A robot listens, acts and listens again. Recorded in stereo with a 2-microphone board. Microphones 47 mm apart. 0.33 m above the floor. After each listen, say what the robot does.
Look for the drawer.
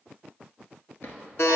Turn 65° left.
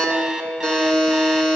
Keep listening.
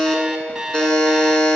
Keep listening.
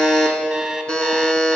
I heard a drawer, but can't make it out now. It was about straight ahead or 50° left.